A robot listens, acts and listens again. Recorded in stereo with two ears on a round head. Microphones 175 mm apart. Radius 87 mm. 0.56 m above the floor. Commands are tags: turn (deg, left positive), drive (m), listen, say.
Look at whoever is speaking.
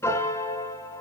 <listen/>
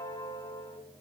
<listen/>
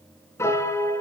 <say>I can't make out anyone speaking to turn to.</say>